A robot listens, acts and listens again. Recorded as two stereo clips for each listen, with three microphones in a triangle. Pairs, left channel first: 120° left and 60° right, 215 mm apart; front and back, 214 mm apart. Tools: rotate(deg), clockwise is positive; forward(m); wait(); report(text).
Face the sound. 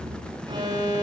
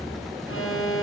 rotate(-10)
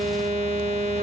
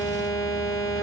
report("Found it: an alarm, straight ahead.")